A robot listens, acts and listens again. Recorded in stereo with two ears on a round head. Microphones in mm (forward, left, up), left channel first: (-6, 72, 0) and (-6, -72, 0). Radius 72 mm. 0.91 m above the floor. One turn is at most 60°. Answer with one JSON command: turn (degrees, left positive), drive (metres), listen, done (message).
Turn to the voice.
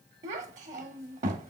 {"turn": -50}
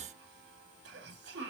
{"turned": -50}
{"turn": -60}
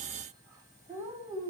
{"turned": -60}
{"turn": -20}
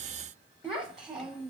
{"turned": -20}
{"done": "Facing the child speaking."}